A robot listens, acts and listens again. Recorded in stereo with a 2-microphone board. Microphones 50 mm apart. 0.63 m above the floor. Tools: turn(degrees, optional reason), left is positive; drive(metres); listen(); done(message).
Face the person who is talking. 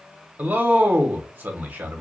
turn(degrees=-35, reason="The man speaking: about 35° right or 145° right.")
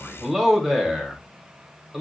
done("Facing the man speaking.")